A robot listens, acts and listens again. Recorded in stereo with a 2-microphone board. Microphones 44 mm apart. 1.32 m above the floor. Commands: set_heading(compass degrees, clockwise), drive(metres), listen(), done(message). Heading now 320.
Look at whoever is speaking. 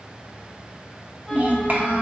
set_heading(0)
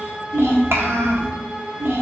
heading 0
set_heading(95)
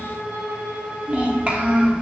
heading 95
set_heading(125)
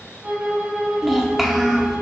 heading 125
done("Found it: a child speaking, straight ahead.")